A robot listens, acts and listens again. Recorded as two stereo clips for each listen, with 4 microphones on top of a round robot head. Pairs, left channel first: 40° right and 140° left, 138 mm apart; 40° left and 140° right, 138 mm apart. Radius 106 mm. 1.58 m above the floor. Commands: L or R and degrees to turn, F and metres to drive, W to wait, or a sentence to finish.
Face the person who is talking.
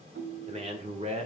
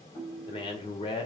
L95
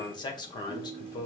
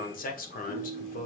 L20
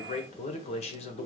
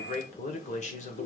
Found it: a man speaking, straight ahead, 1 to 2 m away.